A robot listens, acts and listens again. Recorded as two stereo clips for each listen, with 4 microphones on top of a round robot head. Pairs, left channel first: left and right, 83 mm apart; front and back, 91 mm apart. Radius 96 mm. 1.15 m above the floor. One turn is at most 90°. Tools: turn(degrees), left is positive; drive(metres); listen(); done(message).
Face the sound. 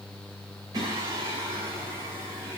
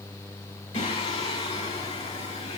turn(degrees=-25)
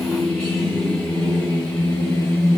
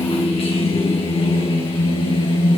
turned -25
turn(degrees=25)
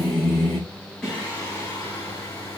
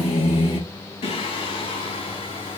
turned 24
turn(degrees=15)
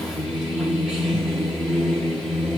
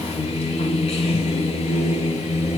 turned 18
done("Facing the singing, 2 to 4 m away.")